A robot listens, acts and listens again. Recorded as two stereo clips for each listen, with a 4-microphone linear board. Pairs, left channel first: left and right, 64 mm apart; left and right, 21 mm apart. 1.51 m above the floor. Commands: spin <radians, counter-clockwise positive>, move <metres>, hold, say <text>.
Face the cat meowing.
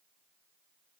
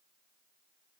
hold
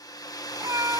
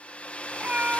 spin -1.05
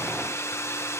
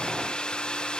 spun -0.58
hold
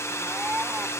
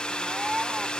spin -0.44
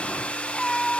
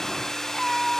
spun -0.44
spin 0.17
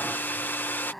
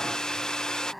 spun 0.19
say Facing the cat meowing.